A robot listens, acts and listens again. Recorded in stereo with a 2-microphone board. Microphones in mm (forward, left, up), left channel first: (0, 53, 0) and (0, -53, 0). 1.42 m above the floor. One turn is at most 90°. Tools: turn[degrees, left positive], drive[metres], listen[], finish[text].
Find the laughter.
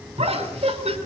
Action: turn[-90]
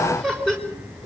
Action: finish[Found it: laughter, straight ahead.]